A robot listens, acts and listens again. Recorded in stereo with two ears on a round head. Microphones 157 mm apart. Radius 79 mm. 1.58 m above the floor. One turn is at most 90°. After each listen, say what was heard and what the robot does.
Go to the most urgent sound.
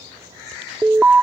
Turn 30° right.
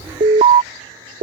So it is at 145° right. Turn 90° right.
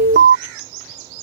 The alarm is now 65° right. Turn 65° right.
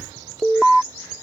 Drive 1.0 m forward.
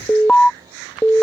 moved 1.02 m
Drive 1.0 m forward.
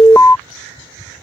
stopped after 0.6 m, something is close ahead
The alarm is now 15° left. Turn 15° left.
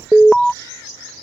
I am next to the alarm.